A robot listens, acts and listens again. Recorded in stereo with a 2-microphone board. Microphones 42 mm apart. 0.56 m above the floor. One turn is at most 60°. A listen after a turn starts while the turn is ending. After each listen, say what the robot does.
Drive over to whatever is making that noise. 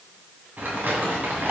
Turn 55° right.
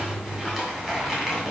Drive 1.0 m forward.
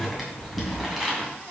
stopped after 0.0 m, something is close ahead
Something is in my way. I am facing the crumpling but have not reached it.